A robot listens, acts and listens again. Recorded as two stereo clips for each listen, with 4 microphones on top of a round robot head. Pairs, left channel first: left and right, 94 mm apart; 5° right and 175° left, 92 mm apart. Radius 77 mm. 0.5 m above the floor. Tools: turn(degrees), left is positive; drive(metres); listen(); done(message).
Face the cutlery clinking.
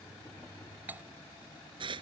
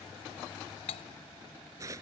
turn(degrees=-15)
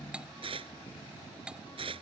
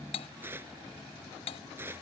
turn(degrees=-10)
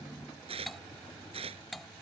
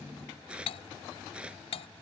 done("Facing the cutlery clinking.")